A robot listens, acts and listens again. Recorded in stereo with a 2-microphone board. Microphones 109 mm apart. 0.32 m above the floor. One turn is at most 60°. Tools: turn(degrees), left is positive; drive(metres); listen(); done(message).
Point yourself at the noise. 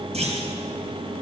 turn(degrees=-60)
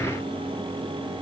listen()
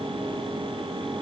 done("I heard a clunk, but can't make it out now. It was about 15° right or 45° right.")